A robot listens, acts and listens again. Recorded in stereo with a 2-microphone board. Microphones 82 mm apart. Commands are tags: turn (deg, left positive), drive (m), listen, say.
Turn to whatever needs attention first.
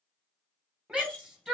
<turn deg="-30"/>
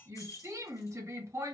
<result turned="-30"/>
<turn deg="-140"/>
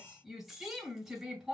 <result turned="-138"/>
<say>Found it: a shout, straight ahead, 1 to 2 m away.</say>